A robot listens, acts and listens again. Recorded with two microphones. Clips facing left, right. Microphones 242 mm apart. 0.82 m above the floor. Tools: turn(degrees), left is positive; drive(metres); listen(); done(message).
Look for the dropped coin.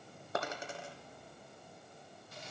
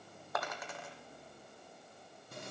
turn(degrees=30)
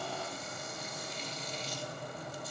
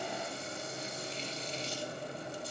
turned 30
listen()
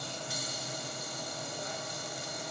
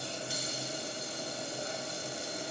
done("I heard a dropped coin, but can't make it out now. It was about straight ahead or 120° left.")